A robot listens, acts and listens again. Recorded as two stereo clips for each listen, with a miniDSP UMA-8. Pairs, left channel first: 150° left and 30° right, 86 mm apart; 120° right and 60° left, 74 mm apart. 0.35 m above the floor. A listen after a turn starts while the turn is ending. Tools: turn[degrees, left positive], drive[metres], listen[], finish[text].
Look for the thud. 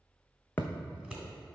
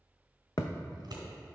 Thought: The thud: 145° right.
Action: turn[-145]
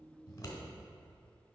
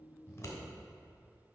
Action: finish[Facing where the thud came from. I can't hear it now.]